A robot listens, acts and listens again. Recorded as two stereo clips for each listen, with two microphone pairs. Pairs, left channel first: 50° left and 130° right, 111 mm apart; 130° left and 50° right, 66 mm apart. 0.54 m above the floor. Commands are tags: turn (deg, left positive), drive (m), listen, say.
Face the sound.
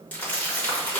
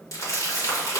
<turn deg="125"/>
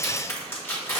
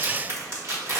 <turn deg="-10"/>
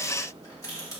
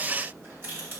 <say>Facing the crumpling.</say>